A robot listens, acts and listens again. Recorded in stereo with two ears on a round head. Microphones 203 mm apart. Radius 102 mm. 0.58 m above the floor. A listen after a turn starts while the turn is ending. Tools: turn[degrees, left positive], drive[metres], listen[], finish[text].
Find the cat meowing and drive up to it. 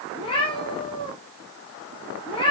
Thought: The cat meowing: about 25° left or 155° left.
Action: turn[25]
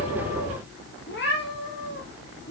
Thought: So it is at 130° left.
Action: turn[130]
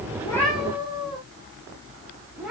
Action: drive[1.0]
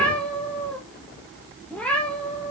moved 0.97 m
Action: drive[1.0]
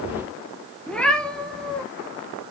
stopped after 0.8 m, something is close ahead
Action: finish[Arrived at the cat meowing, straight ahead.]